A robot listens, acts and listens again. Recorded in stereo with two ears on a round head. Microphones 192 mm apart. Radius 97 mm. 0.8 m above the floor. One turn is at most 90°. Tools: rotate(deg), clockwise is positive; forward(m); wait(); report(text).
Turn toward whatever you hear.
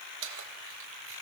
rotate(70)
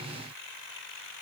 wait()
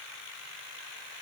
wait()
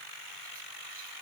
report("I heard keys jangling, but can't make it out now. It was about straight ahead or 40° right.")